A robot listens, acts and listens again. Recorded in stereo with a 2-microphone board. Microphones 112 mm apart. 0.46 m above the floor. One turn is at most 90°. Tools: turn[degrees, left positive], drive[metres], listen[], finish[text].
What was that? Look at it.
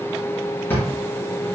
Thought: The drawer: about 20° left or 160° left.
Action: turn[20]
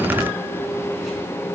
Action: listen[]
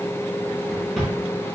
Action: finish[Found it: a drawer, straight ahead.]